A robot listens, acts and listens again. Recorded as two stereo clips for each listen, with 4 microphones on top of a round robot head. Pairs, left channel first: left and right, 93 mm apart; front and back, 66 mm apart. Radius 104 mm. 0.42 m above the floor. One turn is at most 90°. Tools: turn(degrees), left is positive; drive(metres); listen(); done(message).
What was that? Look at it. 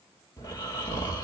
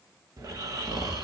turn(degrees=90)
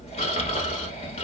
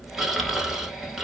turn(degrees=90)
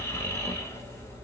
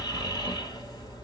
turn(degrees=25)
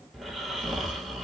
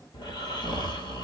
done("Facing the snoring.")